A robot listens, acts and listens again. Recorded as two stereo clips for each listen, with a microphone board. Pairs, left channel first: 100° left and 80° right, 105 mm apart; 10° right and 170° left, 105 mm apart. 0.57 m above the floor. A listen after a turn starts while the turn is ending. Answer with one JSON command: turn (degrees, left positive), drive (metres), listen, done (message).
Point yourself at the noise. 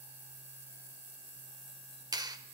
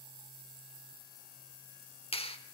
{"turn": -30}
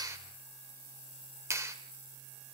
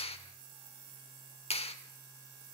{"turn": -15}
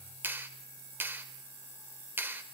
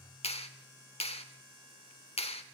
{"turn": -10}
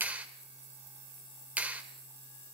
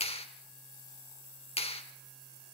{"done": "Found it: a clap, straight ahead."}